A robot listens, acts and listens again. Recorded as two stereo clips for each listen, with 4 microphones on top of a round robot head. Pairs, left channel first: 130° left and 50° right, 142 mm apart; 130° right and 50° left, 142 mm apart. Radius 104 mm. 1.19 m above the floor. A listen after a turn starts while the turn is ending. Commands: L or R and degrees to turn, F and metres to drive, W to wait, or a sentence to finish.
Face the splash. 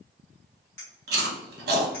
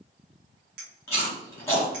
W
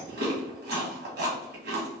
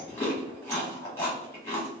W
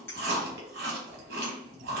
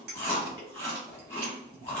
I can't make out a splash, only chewing and a clink.